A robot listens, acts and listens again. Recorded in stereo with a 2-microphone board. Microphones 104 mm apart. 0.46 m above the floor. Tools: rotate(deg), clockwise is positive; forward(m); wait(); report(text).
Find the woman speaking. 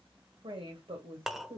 rotate(55)
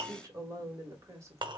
rotate(30)
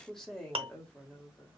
rotate(-15)
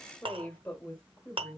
rotate(-20)
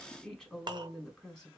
report("Found it: a woman speaking, straight ahead.")